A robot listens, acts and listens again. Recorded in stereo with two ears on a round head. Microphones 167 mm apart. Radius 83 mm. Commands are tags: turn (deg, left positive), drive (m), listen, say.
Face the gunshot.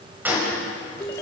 <turn deg="-30"/>
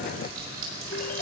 <listen/>
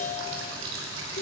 <say>I heard a gunshot, but can't make it out now. It was about 20° left or 140° right.</say>